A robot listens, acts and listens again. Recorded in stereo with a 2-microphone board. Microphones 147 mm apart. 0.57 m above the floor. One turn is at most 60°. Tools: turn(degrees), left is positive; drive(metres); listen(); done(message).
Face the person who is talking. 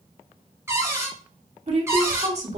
turn(degrees=-50)
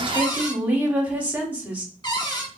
turn(degrees=-15)
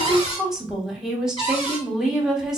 done("Found it: a woman speaking, straight ahead.")